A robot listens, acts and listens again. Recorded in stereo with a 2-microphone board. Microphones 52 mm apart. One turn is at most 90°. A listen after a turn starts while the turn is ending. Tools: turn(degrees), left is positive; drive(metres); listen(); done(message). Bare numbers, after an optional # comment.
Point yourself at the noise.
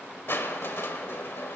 # The crushing: about 55° left or 125° left.
turn(55)
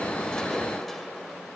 done("Facing the crushing.")